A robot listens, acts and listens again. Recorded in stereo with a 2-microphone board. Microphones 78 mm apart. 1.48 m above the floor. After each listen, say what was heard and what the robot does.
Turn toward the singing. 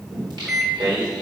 The singing: about 65° right or 115° right. Turn 65° right.
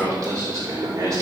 So it is at 45° right. Turn 45° right.
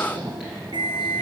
Keep listening.
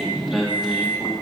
Facing the singing.